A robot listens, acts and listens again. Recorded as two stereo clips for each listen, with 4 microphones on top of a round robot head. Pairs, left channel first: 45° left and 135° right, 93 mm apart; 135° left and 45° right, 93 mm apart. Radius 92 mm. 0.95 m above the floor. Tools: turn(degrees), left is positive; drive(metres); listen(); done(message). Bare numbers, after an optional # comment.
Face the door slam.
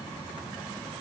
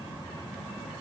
listen()
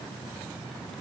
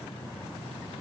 listen()
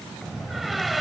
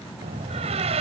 # The door slam: 45° right.
turn(-45)
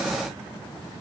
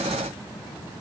done("I heard a door slam from this way, but can't make it out now.")